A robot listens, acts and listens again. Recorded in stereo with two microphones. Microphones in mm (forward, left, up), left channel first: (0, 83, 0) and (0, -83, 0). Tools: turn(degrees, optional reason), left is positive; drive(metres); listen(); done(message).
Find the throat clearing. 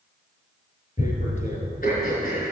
turn(degrees=60, reason="The throat clearing: about 60° left or 120° left.")
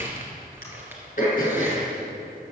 turn(degrees=55, reason="So it is at 55° left.")
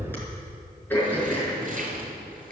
turn(degrees=15, reason="The throat clearing is now 15° left.")
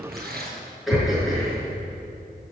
done("Found it: throat clearing, straight ahead, over 4 m away.")